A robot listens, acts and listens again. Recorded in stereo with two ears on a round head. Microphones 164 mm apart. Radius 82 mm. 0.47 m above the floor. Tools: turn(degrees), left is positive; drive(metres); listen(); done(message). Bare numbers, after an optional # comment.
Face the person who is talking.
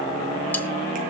listen()
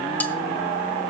listen()
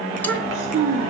turn(-90)
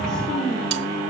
done("Facing the child speaking, over 4 m away.")